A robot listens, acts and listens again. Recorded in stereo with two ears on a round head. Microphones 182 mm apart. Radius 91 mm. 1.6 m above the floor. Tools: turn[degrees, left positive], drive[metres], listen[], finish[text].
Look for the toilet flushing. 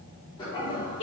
Thought: The toilet flushing: about 25° left or 155° left.
Action: turn[25]
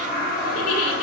Thought: So it is at 130° left.
Action: turn[130]
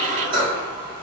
Thought: The toilet flushing is now 25° right.
Action: turn[-25]
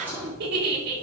Thought: The toilet flushing is now 10° right.
Action: turn[-10]
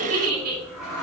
Action: finish[Found it: a toilet flushing, straight ahead, 2 to 4 m away.]